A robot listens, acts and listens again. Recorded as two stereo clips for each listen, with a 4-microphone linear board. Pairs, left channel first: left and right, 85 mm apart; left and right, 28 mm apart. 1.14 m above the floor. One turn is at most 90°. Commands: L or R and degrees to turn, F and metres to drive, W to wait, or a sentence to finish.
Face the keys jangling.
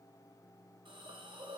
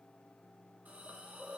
W
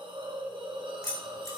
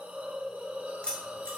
L40
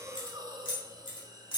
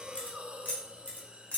L90
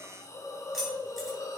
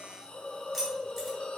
Found it: keys jangling, straight ahead.